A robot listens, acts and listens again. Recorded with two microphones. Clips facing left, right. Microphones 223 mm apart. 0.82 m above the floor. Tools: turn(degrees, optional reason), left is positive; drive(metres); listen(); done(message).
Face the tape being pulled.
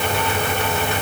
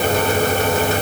listen()
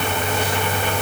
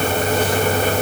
listen()
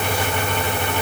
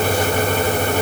done("I can't make out tape being pulled.")